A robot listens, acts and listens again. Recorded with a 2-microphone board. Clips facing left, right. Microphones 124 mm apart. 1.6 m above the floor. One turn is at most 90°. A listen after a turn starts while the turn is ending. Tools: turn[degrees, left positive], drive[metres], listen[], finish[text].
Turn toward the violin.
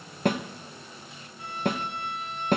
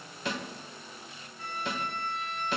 Action: turn[30]
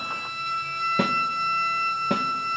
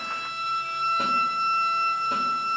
Thought: So it is at 20° right.
Action: turn[-20]
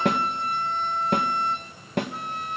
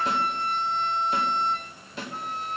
Action: finish[Found it: a violin, straight ahead, over 4 m away.]